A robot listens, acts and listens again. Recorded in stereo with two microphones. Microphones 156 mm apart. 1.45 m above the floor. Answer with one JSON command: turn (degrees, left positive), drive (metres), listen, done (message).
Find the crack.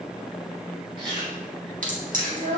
{"turn": -65}
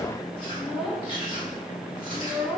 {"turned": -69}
{"listen": true}
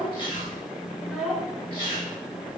{"done": "I heard a crack, but can't make it out now. It was about 5° left or 45° right."}